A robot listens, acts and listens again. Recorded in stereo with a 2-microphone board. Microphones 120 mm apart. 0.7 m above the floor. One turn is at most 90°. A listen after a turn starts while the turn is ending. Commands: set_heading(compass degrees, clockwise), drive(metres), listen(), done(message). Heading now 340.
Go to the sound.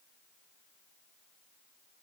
listen()
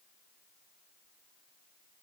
listen()
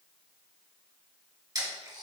set_heading(10)
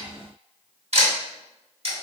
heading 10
set_heading(100)
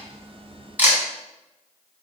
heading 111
set_heading(126)
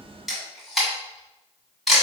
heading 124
drive(1.0)
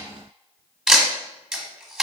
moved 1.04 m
drive(1.0)
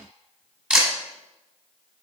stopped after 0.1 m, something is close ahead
set_heading(134)
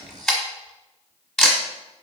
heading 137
done("I am next to the camera shutter.")